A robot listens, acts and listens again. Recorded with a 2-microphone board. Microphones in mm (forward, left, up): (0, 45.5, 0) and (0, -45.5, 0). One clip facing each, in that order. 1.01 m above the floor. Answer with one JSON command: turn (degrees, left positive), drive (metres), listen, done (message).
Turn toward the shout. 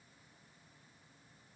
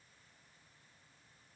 {"listen": true}
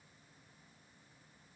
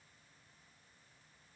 {"listen": true}
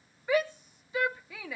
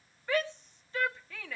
{"turn": 30}
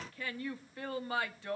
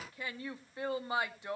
{"turn": -20}
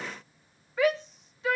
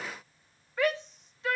{"done": "Found it: a shout, straight ahead."}